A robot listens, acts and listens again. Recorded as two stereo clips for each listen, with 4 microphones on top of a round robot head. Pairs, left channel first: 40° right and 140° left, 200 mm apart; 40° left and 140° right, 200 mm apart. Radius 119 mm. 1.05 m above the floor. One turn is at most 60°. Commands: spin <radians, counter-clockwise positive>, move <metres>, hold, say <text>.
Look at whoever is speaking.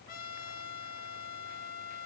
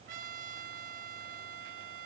hold
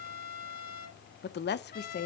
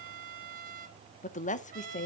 spin -0.17
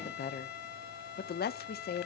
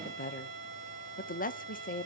say Facing the woman speaking.